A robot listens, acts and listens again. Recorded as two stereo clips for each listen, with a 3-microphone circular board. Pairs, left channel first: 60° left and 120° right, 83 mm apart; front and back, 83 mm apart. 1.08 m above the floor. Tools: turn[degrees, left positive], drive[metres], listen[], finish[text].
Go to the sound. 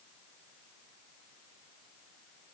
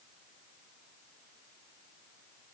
Action: listen[]
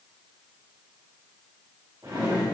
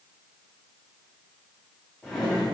Thought: The drawer: 85° right.
Action: turn[-85]
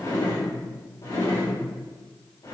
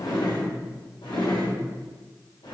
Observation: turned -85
Thought: The drawer is now 10° left.
Action: turn[10]
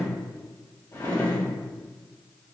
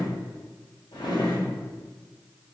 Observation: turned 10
Action: drive[1.0]
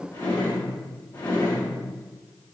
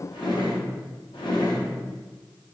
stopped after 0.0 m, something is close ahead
Action: finish[Something is in my way. I am facing the drawer but have not reached it.]